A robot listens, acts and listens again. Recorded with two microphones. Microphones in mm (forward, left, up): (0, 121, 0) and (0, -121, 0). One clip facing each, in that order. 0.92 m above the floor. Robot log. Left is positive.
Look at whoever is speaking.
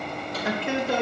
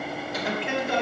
note: The man speaking: about 45° left or 135° left.
cmd yaw +45
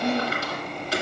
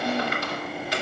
note: So it is at 85° left.
cmd yaw +85
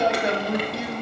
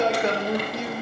note: The man speaking is now 10° left.
cmd yaw +10
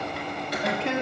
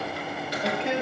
end: Facing the man speaking, 1 to 2 m away.